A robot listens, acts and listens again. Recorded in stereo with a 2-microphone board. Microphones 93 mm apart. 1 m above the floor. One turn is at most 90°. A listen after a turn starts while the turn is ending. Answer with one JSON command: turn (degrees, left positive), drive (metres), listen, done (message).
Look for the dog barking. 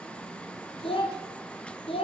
{"listen": true}
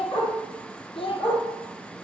{"turn": 60}
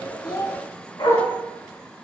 {"turn": 60}
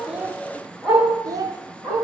{"turn": -15}
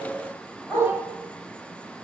{"done": "Found it: a dog barking, straight ahead, over 4 m away."}